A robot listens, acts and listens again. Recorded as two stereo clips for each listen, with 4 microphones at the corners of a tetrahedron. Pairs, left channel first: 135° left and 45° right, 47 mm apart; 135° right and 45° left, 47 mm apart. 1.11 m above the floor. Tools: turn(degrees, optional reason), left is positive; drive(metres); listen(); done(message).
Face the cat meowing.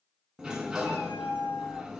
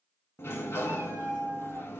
turn(degrees=125, reason="The cat meowing: 125° left.")
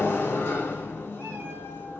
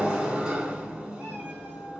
listen()
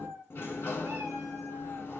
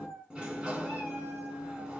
turn(degrees=-15, reason="The cat meowing is now 15° right.")
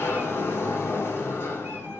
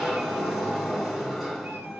listen()
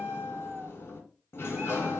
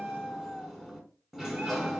done("Facing the cat meowing, 2 to 4 m away.")